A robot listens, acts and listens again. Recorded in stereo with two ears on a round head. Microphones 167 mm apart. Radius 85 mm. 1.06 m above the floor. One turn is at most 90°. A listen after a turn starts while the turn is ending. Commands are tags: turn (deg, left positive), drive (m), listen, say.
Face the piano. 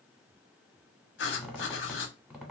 <listen/>
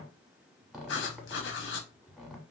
<listen/>
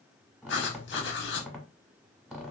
<say>I can't make out a piano, only writing and a squeak.</say>